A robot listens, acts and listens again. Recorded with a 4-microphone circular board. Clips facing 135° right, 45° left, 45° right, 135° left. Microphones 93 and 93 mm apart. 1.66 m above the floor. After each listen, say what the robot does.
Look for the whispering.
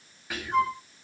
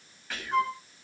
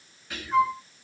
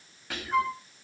Turn 145° left.
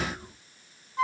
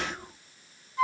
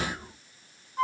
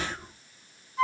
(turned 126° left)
Turn 20° left.
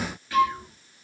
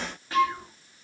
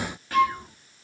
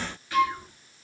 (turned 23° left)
Facing the whispering.